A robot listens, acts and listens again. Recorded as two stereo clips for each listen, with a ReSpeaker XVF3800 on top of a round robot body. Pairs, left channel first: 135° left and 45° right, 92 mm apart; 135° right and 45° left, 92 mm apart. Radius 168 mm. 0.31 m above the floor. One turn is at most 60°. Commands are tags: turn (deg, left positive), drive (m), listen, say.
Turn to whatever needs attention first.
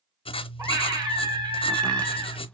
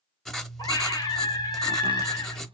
<turn deg="-60"/>
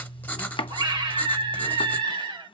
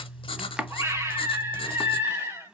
<turn deg="-10"/>
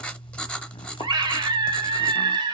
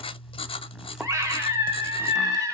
<say>Facing the scream, 2 to 4 m away.</say>